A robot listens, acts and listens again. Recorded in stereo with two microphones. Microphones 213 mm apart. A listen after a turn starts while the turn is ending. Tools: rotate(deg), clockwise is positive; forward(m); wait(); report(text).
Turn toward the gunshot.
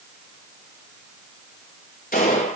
rotate(-40)
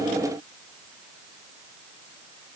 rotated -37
wait()
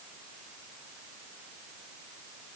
report("I heard a gunshot, but can't make it out now. It was about 5° left or 100° left.")